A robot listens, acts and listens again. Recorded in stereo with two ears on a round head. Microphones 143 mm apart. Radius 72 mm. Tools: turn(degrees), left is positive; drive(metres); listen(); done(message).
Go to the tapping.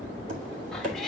turn(degrees=-50)
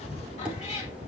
drive(metres=1.0)
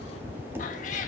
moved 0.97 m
turn(degrees=-15)
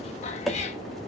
drive(metres=1.0)
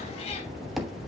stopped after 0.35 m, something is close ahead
done("Arrived at the tapping, straight ahead.")